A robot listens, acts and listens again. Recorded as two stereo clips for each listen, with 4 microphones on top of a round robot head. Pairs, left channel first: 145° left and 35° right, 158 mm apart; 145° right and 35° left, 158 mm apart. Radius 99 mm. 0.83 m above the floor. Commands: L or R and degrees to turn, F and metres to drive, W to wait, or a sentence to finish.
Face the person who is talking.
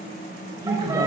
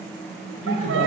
R100
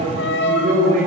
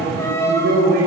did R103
Found it: a man speaking, straight ahead.